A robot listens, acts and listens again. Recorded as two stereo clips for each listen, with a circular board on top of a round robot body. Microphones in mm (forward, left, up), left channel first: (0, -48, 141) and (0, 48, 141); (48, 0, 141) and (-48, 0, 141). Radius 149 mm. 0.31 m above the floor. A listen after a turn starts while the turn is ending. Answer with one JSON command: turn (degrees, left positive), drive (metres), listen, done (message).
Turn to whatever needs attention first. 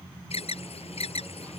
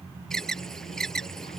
{"turn": -85}
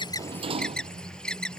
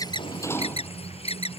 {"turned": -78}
{"turn": -10}
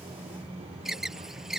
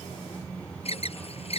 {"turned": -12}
{"done": "Found it: an alarm, straight ahead."}